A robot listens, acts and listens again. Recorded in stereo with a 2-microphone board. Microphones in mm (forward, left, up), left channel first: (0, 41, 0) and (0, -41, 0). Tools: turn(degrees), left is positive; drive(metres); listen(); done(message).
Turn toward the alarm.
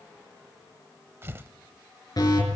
turn(degrees=55)
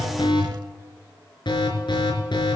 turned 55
turn(degrees=70)
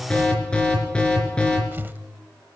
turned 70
turn(degrees=10)
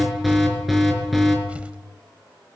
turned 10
done("Facing the alarm.")